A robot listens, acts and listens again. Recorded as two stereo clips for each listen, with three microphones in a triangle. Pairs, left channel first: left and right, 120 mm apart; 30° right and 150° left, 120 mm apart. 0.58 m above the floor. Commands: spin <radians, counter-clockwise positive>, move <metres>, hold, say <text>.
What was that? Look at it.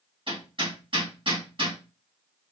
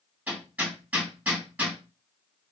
spin -2.36
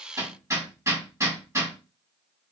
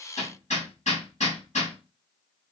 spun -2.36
spin -0.44
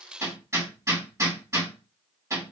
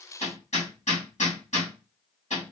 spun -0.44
spin -0.44
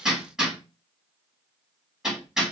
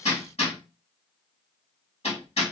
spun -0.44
say Facing the hammering, 2 to 4 m away.